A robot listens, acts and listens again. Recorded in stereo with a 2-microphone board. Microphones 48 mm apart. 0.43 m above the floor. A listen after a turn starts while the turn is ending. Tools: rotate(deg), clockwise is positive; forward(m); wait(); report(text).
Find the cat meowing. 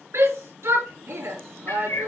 rotate(-65)
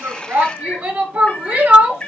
rotate(-30)
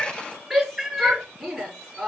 rotate(10)
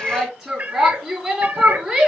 rotate(35)
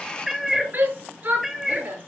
report("Facing the cat meowing, 1 to 2 m away.")